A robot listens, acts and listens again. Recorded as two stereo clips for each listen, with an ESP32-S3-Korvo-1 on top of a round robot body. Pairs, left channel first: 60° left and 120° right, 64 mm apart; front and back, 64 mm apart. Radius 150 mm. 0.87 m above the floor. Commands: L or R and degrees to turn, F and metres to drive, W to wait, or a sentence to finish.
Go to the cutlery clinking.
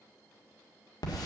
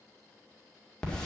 W
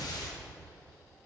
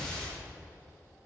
W
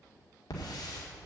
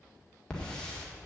I can't make out cutlery clinking, only a hiss.